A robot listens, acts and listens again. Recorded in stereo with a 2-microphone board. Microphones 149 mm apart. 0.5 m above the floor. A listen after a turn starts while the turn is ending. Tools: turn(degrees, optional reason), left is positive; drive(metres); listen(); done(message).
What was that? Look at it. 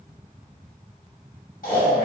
turn(degrees=75, reason="The snoring: about 75° left or 105° left.")
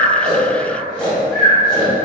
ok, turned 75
done("Facing the snoring.")